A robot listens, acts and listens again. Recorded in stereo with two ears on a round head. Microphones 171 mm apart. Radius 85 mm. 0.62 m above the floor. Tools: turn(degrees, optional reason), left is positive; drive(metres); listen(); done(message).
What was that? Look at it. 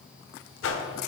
turn(degrees=90)
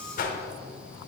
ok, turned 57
turn(degrees=45, reason="So it is at 45° left.")
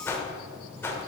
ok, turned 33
turn(degrees=15, reason="The whoosh is now 15° left.")
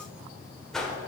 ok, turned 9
done("Facing the whoosh, under 1 m away.")